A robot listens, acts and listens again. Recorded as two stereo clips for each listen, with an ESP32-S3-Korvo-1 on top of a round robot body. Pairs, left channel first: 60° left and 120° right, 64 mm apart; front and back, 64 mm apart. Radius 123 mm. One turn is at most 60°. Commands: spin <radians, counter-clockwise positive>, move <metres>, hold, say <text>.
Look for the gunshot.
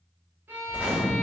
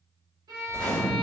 say Found it: a gunshot, straight ahead, 1 to 2 m away.